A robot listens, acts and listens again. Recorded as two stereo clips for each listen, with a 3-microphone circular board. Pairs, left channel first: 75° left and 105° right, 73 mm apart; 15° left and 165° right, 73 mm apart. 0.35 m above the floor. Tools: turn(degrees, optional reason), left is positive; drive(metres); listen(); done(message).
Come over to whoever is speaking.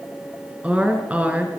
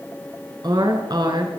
turn(degrees=-175, reason="The woman speaking: 175° right.")
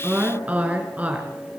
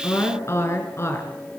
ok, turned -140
turn(degrees=-35, reason="The woman speaking is now 35° right.")
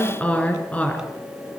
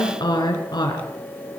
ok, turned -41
drive(metres=1.0)
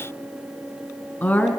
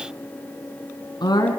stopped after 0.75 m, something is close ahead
done("Blocked. The woman speaking is further on, straight ahead.")